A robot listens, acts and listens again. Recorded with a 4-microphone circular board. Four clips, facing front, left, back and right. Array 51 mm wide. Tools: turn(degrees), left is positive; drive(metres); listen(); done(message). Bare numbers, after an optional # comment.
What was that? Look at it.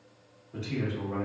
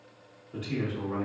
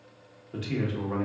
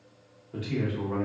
# The man speaking: 170° right.
turn(-170)
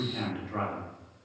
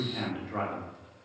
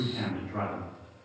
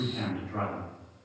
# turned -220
# The man speaking is now 50° left.
turn(50)
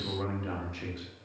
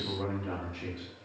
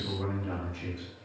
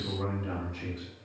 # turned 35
# The man speaking is now 15° left.
turn(15)
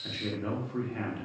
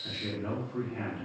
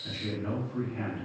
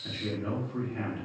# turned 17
done("Found it: a man speaking, straight ahead.")